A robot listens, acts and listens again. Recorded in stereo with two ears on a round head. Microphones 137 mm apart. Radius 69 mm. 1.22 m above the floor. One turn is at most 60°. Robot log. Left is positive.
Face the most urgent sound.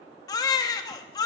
note: The baby crying: about 25° left or 155° left.
cmd yaw +25
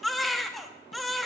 end: Facing the baby crying.